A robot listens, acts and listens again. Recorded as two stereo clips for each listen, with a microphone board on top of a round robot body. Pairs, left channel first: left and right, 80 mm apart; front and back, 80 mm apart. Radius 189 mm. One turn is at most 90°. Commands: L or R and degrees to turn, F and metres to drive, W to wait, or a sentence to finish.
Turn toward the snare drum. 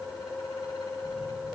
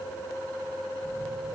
W
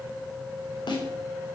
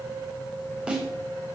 L90
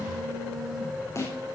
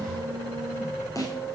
L40
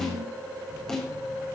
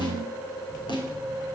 L10
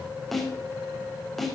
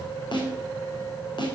Found it: a snare drum, straight ahead.